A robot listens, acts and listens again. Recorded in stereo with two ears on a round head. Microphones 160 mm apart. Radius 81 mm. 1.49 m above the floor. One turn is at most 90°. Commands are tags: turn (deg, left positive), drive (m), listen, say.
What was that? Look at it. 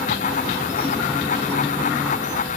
<listen/>
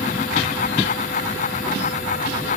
<listen/>
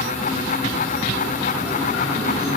<say>I can't make out anything.</say>